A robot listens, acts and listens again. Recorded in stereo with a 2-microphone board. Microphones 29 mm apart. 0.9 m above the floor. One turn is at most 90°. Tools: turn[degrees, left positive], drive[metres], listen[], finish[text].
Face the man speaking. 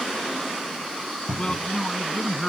Thought: The man speaking: about 30° left or 150° left.
Action: turn[30]
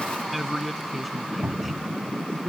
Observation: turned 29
Action: finish[Found it: a man speaking, straight ahead.]